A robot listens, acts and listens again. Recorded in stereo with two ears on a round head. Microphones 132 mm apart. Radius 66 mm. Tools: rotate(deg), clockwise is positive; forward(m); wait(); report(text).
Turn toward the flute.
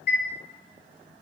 wait()
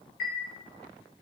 wait()
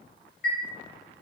report("I can't make out a flute, only a chime.")